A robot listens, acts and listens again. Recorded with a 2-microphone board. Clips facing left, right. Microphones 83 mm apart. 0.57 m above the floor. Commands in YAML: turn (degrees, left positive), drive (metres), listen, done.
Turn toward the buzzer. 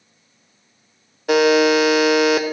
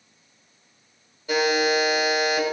turn: 65
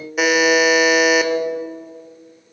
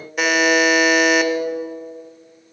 done: "Found it: a buzzer, straight ahead, under 1 m away."